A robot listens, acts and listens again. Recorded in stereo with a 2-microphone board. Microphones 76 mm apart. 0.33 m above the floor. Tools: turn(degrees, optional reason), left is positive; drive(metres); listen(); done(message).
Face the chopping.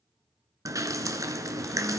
listen()
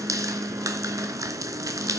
listen()
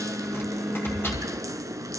turn(degrees=30, reason="The chopping: about 30° left or 150° left.")
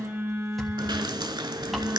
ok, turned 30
listen()
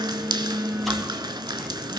listen()
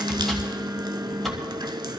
done("Found it: chopping, straight ahead, 2 to 4 m away.")